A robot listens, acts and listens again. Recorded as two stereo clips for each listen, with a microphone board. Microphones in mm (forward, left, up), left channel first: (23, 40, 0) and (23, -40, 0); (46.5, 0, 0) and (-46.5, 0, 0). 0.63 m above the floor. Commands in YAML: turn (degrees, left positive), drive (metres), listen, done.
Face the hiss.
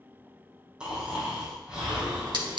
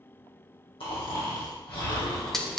turn: -85
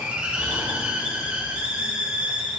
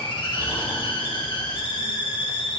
turn: -20
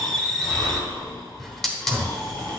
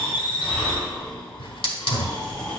done: "Facing the hiss."